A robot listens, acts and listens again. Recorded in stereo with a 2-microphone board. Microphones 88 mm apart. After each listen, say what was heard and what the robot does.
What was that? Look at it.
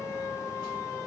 Keep listening.
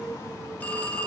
The phone ringing: about 20° left or 160° left. Turn 20° left.
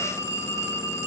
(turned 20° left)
So it is at 140° left. Turn 140° left.
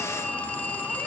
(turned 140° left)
The phone ringing is now 20° left. Turn 20° left.
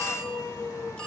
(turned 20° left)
Keep listening.
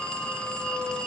The phone ringing is now 10° left. Turn 10° left.
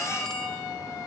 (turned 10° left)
Keep listening.
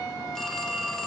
Found it: a phone ringing, straight ahead.